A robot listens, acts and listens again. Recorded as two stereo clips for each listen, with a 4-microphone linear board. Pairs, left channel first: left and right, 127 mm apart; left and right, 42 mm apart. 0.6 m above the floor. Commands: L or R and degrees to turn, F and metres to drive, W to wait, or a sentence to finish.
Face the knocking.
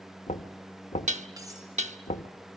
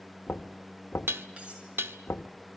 L65
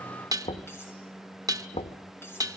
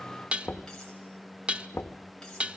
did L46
L60
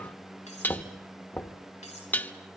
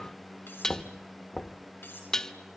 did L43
L15
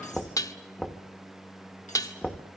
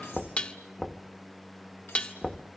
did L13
Facing the knocking, under 1 m away.